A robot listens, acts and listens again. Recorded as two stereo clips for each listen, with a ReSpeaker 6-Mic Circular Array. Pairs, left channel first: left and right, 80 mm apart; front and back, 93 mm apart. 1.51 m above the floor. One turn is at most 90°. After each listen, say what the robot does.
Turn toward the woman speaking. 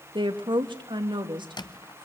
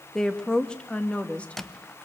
Turn 75° right.
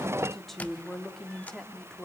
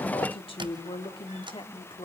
Found it: a woman speaking, straight ahead.